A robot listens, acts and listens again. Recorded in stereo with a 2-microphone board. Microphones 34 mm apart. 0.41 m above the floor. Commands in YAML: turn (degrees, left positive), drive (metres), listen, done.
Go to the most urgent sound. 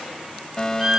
turn: 15
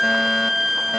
listen: true
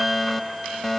drive: 1.0
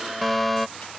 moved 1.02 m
drive: 1.0
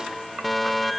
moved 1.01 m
drive: 1.0
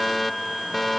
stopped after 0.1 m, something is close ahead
done: "Arrived at the fire alarm, straight ahead."